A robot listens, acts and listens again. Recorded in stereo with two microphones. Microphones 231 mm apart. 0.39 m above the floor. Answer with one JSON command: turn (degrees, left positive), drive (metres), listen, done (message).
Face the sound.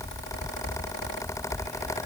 {"listen": true}
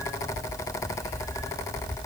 {"listen": true}
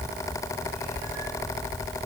{"done": "I can't make out anything to turn to."}